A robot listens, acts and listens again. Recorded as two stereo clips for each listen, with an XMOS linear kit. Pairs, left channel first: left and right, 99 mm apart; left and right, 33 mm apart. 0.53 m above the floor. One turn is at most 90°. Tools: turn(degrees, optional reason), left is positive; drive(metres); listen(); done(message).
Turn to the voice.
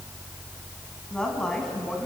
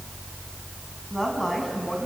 turn(degrees=30)
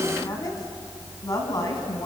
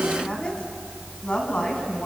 turn(degrees=90, reason="So it is at 145° left.")
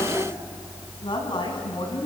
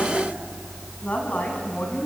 turn(degrees=55, reason="The woman speaking is now 55° left.")
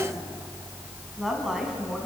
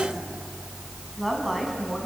done("Found it: a woman speaking, straight ahead, over 4 m away.")